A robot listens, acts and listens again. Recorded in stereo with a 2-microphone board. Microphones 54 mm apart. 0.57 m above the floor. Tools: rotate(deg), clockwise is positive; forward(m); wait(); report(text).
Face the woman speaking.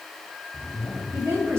rotate(60)
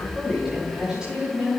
rotate(20)
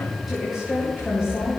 rotate(10)
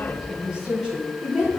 rotate(15)
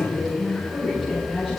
report("Facing the woman speaking.")